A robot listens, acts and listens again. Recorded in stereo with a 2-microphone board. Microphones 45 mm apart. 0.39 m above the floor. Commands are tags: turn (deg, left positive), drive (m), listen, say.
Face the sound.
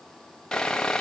<turn deg="30"/>
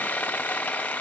<turn deg="140"/>
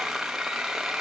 <say>Facing the sawing.</say>